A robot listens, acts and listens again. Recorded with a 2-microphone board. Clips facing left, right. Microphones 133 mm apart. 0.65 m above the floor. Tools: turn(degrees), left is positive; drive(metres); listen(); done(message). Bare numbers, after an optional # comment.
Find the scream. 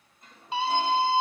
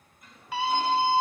# The scream: about 25° left or 155° left.
turn(25)
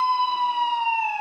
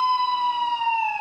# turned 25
done("Facing the scream.")